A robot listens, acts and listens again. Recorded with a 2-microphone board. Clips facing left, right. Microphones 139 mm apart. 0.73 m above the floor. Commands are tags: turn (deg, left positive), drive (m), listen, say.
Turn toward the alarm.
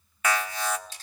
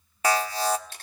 <turn deg="-35"/>
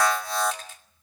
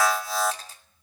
<say>Found it: an alarm, straight ahead, 1 to 2 m away.</say>